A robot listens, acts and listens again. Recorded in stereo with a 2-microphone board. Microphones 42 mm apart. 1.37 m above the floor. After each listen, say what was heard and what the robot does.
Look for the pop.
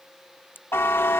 The pop: about 55° left or 125° left. Turn 55° left.
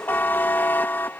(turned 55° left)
Keep listening.
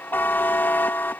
I heard a pop, but can't make it out now. It was about straight ahead or 70° left.